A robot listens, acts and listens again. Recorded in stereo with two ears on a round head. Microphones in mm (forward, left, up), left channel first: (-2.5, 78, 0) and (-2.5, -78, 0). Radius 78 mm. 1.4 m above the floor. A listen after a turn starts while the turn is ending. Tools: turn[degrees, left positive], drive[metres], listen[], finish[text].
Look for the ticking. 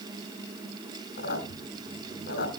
Action: listen[]
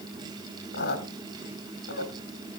Action: listen[]
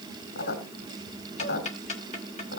Thought: The ticking: about 40° left or 140° left.
Action: turn[40]
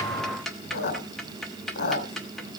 Action: finish[Found it: ticking, straight ahead.]